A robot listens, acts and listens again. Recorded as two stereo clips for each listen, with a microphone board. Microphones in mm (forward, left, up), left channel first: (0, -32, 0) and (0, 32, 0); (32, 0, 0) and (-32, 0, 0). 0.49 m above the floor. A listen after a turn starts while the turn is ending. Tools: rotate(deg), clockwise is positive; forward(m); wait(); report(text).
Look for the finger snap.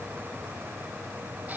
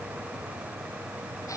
wait()
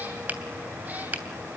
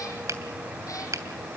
rotate(-155)
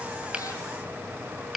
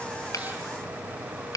report("Found it: a finger snap, straight ahead.")